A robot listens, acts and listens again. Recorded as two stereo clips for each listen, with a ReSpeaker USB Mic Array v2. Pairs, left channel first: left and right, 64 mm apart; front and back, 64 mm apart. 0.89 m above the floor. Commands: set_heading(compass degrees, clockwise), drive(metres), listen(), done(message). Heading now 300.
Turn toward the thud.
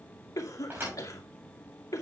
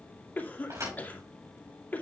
set_heading(85)
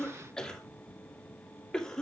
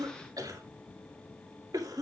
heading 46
set_heading(81)
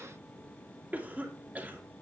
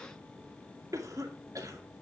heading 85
done("I heard a thud from this way, but can't make it out now.")